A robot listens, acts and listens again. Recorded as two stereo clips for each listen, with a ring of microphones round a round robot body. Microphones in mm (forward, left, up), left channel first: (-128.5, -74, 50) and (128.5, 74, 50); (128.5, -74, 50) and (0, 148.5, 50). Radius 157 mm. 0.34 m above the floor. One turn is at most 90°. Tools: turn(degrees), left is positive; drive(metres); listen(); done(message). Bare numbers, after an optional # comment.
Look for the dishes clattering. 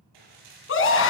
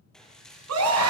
# The dishes clattering: 30° left.
turn(30)
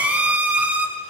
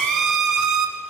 listen()
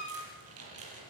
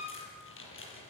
# The dishes clattering is now 15° right.
turn(-15)
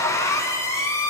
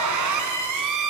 listen()
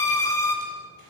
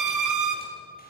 listen()
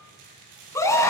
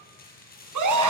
done("Facing the dishes clattering.")